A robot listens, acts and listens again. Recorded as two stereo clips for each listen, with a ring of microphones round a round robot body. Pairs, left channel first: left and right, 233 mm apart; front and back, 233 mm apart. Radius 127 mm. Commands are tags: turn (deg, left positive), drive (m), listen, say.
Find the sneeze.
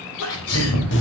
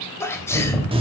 <turn deg="80"/>
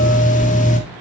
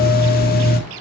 <say>I heard a sneeze from this way, but can't make it out now.</say>